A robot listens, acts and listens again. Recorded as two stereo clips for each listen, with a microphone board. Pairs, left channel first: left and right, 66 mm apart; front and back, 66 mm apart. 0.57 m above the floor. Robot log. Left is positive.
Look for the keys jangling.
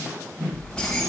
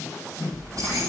note: The keys jangling: 170° left.
cmd yaw +170
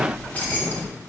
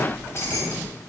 note: The keys jangling is now 40° left.
cmd yaw +40
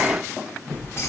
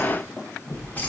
note: The keys jangling is now 55° left.
cmd yaw +55
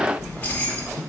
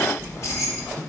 note: The keys jangling is now 35° left.
cmd yaw +35
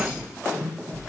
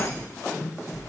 note: The keys jangling is now 15° right.
cmd yaw -15
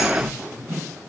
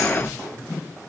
cmd idle
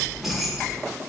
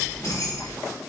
end: Facing the keys jangling, 1 to 2 m away.